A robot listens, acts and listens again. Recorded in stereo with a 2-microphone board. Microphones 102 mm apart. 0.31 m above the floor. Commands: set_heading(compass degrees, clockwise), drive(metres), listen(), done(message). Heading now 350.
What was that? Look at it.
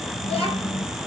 set_heading(280)
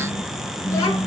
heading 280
set_heading(250)
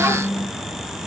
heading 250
set_heading(265)
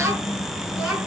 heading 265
done("Facing the child speaking, 2 to 4 m away.")